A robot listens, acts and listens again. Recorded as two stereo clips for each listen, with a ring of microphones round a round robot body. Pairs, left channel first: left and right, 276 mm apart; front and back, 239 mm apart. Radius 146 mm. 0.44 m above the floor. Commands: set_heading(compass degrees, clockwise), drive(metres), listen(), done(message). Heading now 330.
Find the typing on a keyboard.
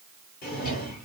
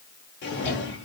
listen()
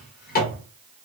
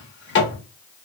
listen()
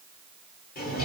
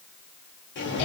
done("I can't make out typing on a keyboard to turn to.")